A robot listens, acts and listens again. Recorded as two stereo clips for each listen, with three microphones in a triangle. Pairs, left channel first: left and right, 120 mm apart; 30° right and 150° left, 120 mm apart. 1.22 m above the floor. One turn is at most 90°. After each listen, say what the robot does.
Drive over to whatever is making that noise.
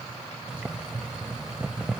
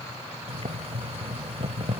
Turn 90° right.
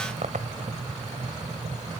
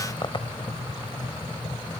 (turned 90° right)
Turn 80° right.
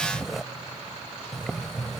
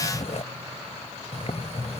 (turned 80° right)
Drive 1.0 m forward.
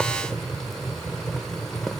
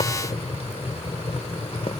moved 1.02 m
Drive 1.0 m forward.
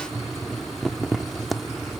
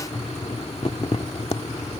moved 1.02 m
Drive 1.0 m forward.
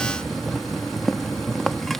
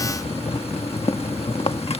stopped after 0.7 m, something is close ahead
Arrived at the boiling, straight ahead.